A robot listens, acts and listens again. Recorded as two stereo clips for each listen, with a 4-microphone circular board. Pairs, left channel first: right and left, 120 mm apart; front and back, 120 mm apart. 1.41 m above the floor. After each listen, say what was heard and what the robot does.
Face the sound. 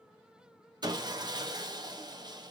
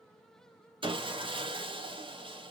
The sawing: 140° left. Turn 140° left.
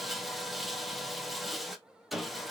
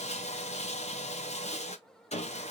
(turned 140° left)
Facing the sawing.